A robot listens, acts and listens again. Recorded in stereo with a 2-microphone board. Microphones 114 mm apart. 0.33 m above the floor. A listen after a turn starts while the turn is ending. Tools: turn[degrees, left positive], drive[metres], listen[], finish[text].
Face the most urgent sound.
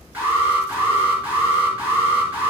Thought: The alarm: about 15° right or 165° right.
Action: turn[-15]
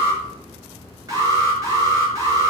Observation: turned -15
Thought: So it is at 150° right.
Action: turn[-150]
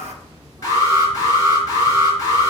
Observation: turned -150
Thought: The alarm is now 30° left.
Action: turn[30]
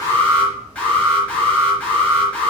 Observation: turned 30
Thought: The alarm is now 10° left.
Action: turn[10]
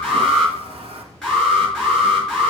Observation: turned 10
Action: finish[Facing the alarm.]